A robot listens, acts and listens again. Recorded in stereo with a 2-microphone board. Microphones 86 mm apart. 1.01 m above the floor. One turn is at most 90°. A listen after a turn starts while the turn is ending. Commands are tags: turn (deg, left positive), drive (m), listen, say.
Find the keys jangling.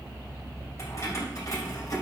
<turn deg="45"/>
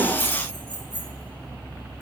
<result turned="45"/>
<turn deg="85"/>
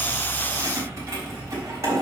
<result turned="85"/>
<turn deg="-40"/>
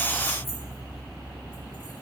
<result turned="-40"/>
<listen/>
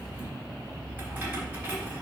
<turn deg="-20"/>
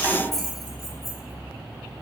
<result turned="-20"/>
<say>Facing the keys jangling.</say>